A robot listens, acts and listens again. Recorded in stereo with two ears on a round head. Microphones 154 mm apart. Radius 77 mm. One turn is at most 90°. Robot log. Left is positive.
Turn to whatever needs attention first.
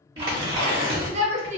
note: The shout: about 40° right or 140° right.
cmd yaw -40
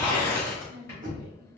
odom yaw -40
cmd idle
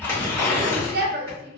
note: So it is at 85° right.
cmd yaw -85
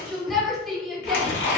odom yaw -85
end: Found it: a shout, straight ahead.